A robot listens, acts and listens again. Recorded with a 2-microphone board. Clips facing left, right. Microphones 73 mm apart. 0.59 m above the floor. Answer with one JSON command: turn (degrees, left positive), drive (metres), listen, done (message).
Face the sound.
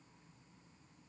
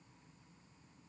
{"listen": true}
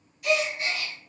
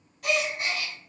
{"turn": -60}
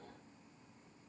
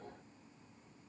{"listen": true}
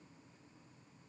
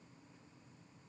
{"done": "I heard a gasp, but can't make it out now. It was about straight ahead or 60° right."}